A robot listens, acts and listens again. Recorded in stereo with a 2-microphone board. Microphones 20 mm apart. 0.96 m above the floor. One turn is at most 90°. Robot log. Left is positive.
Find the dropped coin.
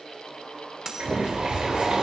note: The dropped coin: about 25° right or 155° right.
cmd yaw -25
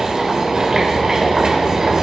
cmd idle
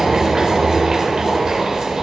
end: I heard a dropped coin, but can't make it out now. It was about straight ahead or 130° right.